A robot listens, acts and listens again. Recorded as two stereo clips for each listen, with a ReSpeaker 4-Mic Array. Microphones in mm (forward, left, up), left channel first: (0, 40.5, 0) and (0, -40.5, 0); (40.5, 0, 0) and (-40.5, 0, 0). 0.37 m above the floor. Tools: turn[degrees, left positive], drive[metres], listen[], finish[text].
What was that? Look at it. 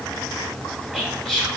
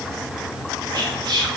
Thought: The whispering: 175° left.
Action: turn[175]
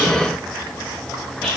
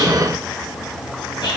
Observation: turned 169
Action: finish[Found it: whispering, straight ahead, 1 to 2 m away.]